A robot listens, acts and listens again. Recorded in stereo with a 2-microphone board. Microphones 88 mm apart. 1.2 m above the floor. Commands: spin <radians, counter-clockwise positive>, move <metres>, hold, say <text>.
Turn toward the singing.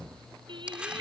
spin -1.13
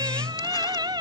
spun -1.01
spin -0.87
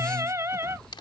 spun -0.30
spin -0.52
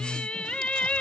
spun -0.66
spin 0.26
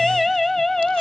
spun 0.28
say Found it: singing, straight ahead.